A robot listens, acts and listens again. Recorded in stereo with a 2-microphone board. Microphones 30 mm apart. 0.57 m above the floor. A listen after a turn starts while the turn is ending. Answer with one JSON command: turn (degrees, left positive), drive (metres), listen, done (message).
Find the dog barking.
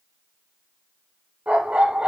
{"turn": -40}
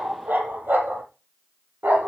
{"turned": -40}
{"turn": -105}
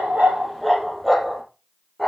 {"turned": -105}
{"done": "Facing the dog barking."}